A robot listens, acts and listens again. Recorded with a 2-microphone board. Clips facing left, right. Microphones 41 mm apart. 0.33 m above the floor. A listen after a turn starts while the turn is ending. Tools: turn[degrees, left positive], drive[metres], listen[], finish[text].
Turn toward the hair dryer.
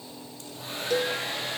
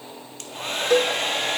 Thought: The hair dryer: about 65° right or 115° right.
Action: turn[-65]
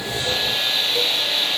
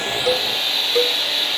Action: finish[Facing the hair dryer.]